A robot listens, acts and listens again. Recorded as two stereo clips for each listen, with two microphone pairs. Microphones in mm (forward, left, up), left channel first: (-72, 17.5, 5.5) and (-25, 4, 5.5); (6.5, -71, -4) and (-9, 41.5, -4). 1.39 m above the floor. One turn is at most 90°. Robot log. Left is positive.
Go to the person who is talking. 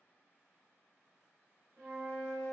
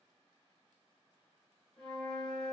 cmd idle
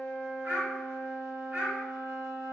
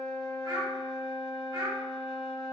note: The child speaking: 40° left.
cmd yaw +40
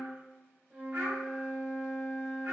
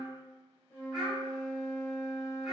note: The child speaking is now 15° left.
cmd yaw +15
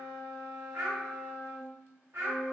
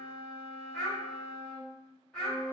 cmd fwd 1.0
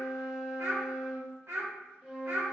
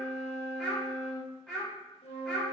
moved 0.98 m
cmd fwd 1.0
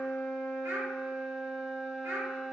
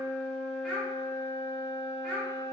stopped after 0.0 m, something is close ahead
end: I am next to the child speaking.